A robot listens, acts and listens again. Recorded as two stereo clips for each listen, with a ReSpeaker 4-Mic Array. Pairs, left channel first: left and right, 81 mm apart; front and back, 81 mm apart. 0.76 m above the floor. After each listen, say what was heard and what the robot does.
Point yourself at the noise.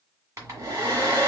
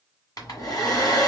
The hair dryer: 40° right. Turn 40° right.
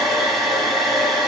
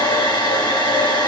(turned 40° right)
Found it: a hair dryer, straight ahead, 1 to 2 m away.